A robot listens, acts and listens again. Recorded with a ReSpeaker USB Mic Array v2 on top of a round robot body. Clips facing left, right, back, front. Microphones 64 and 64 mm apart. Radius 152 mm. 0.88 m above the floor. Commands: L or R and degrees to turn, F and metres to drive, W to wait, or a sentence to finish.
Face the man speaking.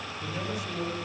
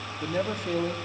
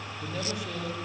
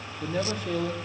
R50
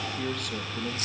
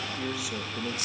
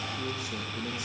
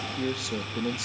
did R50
Facing the man speaking.